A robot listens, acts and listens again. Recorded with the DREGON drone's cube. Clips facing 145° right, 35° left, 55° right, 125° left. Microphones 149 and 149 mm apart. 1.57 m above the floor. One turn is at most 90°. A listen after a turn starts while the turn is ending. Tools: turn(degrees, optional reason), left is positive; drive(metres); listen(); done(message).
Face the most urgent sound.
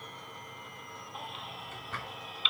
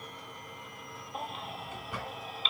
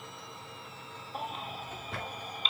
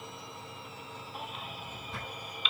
turn(degrees=-10, reason="The baby crying: 10° right.")
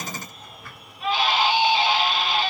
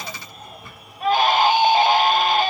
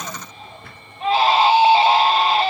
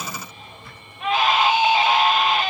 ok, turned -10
done("Found it: a baby crying, straight ahead, 1 to 2 m away.")